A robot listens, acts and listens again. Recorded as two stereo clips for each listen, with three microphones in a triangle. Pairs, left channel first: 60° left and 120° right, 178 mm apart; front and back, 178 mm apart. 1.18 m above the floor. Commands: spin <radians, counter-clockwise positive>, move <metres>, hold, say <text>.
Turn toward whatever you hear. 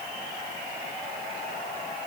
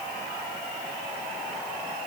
hold
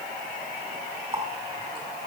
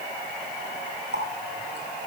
spin 3.14
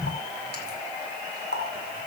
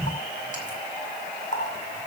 spin 0.70
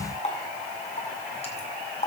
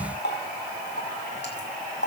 say Found it: a running tap, straight ahead, over 4 m away.